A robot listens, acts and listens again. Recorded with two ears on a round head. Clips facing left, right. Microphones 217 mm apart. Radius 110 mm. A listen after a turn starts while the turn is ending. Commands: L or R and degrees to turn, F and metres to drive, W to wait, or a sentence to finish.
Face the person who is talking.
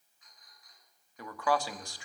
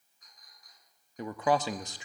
R20
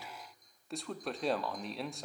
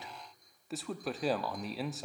Facing the man speaking.